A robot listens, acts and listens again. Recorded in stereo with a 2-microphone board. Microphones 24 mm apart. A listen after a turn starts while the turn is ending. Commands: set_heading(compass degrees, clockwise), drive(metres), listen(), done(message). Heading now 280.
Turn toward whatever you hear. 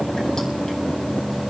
listen()
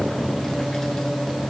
listen()
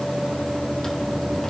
done("I can't make out anything.")